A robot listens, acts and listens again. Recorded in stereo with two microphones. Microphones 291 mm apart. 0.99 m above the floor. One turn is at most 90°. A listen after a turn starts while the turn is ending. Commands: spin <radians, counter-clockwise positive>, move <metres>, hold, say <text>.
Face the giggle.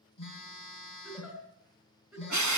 spin 0.52
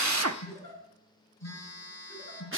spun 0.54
spin -0.52
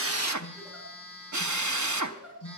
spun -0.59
say Found it: a giggle, straight ahead.